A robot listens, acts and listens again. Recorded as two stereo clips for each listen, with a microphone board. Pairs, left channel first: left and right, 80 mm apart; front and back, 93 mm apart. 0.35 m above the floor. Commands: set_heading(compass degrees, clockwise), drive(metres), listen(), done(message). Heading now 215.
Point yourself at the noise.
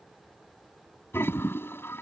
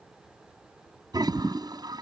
set_heading(70)
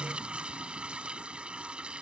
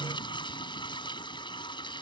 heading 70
set_heading(85)
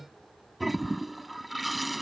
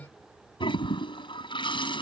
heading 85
done("Facing the toilet flushing.")